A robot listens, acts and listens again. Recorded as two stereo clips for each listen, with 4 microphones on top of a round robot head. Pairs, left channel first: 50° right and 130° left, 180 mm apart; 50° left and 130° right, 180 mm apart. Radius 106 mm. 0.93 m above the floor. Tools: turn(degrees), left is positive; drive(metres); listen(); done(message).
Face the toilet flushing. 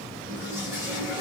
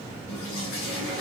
turn(degrees=55)
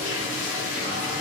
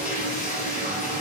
done("Facing the toilet flushing, 2 to 4 m away.")